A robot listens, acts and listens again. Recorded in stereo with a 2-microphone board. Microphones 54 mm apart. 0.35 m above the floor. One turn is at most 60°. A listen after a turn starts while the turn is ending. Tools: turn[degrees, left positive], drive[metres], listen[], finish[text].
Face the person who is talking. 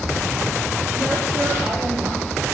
Action: listen[]
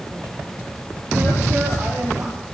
Action: listen[]
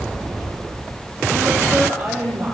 Thought: The woman speaking: about 20° right or 160° right.
Action: turn[-20]
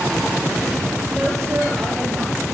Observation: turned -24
Action: finish[Facing the woman speaking, over 4 m away.]